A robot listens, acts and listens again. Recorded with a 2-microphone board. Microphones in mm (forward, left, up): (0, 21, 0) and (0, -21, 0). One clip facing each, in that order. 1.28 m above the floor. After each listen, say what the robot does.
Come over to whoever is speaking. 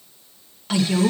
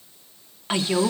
Turn 25° right.
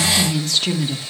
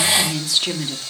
Drive 1.0 m forward.
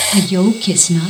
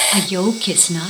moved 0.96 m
Turn 15° right.
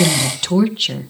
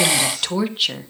Drive 1.0 m forward.
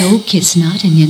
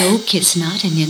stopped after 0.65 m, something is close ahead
Arrived at the woman speaking, straight ahead.